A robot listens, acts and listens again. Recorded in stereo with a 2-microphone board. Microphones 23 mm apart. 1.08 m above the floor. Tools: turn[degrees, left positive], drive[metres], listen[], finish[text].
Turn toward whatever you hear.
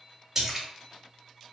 Thought: The splash: about 20° right or 160° right.
Action: turn[-20]
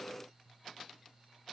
Action: listen[]
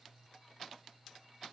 Action: finish[I heard a splash, but can't make it out now. It was about straight ahead or 140° right.]